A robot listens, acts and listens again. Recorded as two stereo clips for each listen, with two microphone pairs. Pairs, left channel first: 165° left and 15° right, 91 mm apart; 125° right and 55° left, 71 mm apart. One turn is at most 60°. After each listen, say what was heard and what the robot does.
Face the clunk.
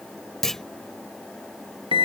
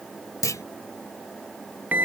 The clunk: 110° right. Turn 60° right.
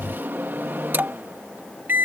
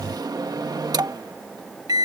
Nothing new. It was at 50° right. Turn 50° right.
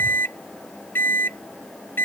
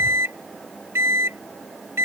I heard a clunk from this way, but can't make it out now.